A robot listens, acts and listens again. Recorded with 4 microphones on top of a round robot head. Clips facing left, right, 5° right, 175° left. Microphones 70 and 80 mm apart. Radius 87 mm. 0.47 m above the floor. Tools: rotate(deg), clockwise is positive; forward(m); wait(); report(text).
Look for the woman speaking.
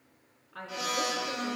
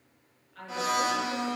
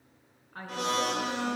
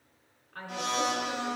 rotate(-75)
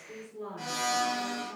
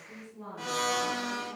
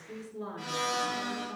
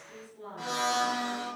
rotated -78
report("Found it: a woman speaking, straight ahead.")